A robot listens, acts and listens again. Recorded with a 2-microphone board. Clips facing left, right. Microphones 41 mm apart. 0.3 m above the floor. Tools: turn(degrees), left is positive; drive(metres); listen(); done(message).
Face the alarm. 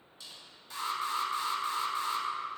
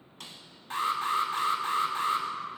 turn(degrees=-45)
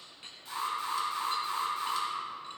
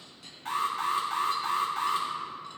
turn(degrees=-80)
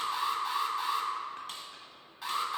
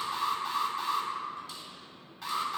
done("Facing the alarm, 2 to 4 m away.")